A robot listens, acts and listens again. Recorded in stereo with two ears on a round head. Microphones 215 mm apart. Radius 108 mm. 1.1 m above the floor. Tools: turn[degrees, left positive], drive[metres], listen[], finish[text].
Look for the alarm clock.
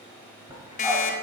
Thought: The alarm clock: about 30° left or 150° left.
Action: turn[30]
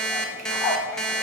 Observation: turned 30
Action: finish[Facing the alarm clock, under 1 m away.]